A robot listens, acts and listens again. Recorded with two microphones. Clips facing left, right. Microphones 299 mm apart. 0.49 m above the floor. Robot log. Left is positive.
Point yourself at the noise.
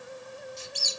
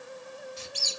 cmd yaw -90
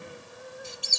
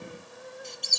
end: Facing the squeak.